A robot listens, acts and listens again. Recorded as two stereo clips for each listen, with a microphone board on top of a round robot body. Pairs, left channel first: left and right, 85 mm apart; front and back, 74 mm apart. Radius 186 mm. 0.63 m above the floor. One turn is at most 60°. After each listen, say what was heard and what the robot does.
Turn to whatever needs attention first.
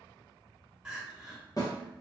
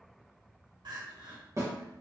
The crying: 170° right. Turn 60° right.
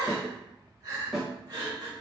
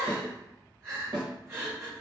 The crying is now 125° right. Turn 60° right.
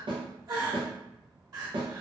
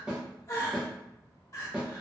The crying is now 45° right. Turn 45° right.
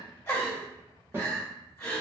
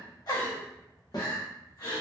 The crying is now 30° left. Turn 30° left.
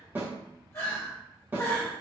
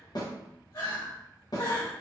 The crying is now 30° left. Turn 30° left.
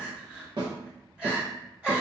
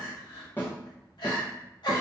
The crying is now 10° right. Turn 10° right.
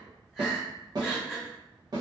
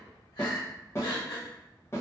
Found it: crying, straight ahead.